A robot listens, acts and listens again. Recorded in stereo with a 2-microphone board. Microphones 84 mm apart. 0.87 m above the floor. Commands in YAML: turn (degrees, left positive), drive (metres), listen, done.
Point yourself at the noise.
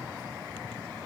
listen: true
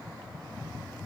listen: true
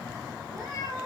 turn: -40
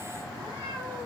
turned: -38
turn: -100
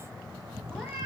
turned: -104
done: "Found it: a cat meowing, straight ahead."